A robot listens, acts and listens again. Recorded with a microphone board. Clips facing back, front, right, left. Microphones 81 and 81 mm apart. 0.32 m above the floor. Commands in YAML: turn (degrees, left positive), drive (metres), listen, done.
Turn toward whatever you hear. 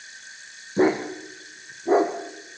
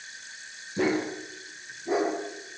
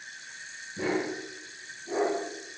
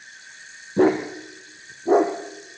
turn: 120
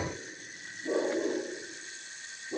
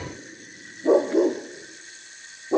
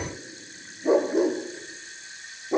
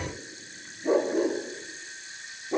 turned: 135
turn: -15
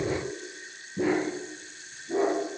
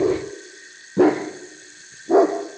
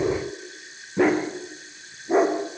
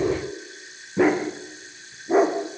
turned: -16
done: "Facing the dog barking."